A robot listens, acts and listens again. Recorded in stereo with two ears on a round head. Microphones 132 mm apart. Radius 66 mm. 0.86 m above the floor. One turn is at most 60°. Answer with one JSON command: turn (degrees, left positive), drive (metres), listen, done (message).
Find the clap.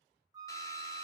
{"listen": true}
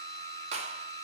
{"turn": -45}
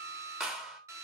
{"done": "Found it: a clap, straight ahead."}